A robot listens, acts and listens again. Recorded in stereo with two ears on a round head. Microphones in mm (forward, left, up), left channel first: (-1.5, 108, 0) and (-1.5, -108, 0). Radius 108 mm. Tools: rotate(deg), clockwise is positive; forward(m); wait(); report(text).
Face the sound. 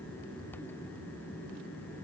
wait()
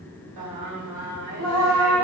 rotate(70)
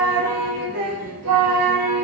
rotate(80)
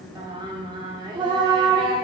rotate(15)
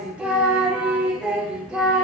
report("Found it: singing, straight ahead.")